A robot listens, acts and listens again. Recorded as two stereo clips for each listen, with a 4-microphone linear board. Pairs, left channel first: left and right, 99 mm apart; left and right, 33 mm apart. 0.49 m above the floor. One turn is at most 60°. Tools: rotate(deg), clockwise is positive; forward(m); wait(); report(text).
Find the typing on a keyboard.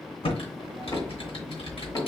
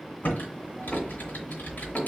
rotate(-60)
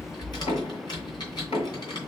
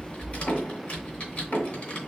rotate(-45)
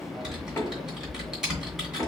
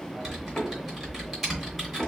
report("Found it: typing on a keyboard, straight ahead.")